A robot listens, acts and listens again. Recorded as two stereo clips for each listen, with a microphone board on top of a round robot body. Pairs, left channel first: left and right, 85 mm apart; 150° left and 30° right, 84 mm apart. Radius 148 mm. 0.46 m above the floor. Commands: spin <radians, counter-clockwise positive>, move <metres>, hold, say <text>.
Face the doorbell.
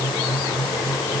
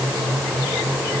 hold
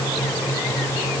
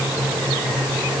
hold
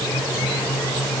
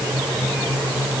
say I can't make out a doorbell to turn to.